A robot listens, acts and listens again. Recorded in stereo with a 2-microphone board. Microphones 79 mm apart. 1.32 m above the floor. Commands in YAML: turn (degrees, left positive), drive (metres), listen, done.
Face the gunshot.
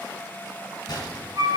turn: 60
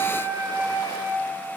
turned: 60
listen: true
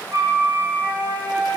done: "I heard a gunshot, but can't make it out now. It was about straight ahead or 60° left."